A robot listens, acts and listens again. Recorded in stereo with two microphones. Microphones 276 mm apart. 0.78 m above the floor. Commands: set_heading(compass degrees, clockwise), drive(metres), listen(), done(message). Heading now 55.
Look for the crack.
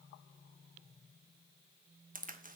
set_heading(85)
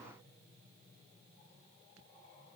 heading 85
listen()
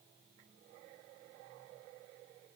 done("I heard a crack, but can't make it out now. It was about straight ahead or 120° right.")